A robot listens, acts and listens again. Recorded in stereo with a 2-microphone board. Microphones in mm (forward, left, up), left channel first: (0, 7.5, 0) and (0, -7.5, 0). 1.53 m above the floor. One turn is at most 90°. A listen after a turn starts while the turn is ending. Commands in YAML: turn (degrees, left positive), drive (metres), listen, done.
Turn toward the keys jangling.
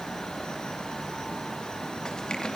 listen: true
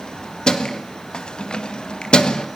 turn: 70
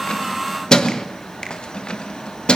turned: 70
turn: 70
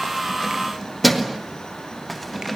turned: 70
done: "Found it: keys jangling, straight ahead."